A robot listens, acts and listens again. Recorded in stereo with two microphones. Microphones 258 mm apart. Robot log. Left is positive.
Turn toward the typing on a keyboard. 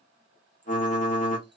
note: The typing on a keyboard: about 30° left or 150° left.
cmd yaw +30
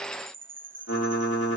note: So it is at 110° left.
cmd yaw +110
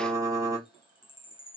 note: The typing on a keyboard is now 15° right.
cmd yaw -15
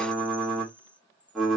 end: Facing the typing on a keyboard.